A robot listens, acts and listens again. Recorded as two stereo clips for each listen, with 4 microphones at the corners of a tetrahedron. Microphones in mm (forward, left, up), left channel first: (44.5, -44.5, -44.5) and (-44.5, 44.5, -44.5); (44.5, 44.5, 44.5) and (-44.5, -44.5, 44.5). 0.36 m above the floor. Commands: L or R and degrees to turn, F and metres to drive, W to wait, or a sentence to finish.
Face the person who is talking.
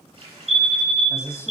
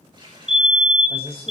L15
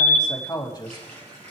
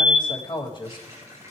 Facing the man speaking.